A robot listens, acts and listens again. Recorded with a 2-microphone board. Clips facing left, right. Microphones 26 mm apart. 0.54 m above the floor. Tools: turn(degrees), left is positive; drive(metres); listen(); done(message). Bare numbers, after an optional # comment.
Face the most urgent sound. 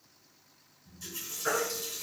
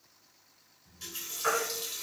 # The baby crying: about 75° right or 105° right.
turn(-75)
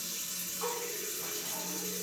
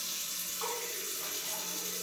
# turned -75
listen()
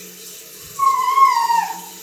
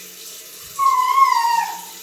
# So it is at 20° right.
turn(-20)
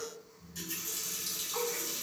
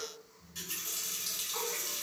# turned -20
listen()
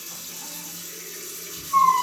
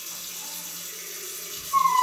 done("Found it: a baby crying, straight ahead.")